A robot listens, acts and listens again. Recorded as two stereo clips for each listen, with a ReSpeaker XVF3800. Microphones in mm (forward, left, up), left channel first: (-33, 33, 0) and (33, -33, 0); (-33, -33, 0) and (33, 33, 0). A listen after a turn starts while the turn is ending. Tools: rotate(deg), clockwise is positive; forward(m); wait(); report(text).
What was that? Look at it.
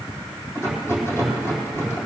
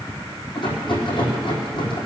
rotate(165)
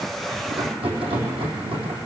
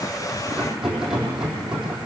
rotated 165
rotate(40)
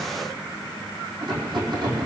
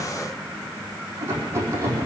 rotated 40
rotate(15)
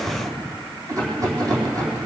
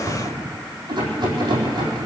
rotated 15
report("Found it: a rattle, straight ahead, over 4 m away.")